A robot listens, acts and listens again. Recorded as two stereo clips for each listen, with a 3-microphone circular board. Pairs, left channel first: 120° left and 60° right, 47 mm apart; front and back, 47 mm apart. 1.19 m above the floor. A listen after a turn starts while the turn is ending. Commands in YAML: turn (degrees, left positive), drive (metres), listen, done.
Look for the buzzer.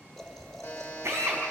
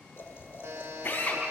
turn: 180
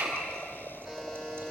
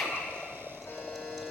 turn: 50
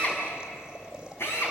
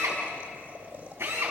listen: true
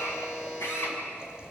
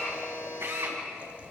turn: 20
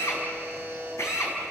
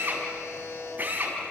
done: "Found it: a buzzer, straight ahead."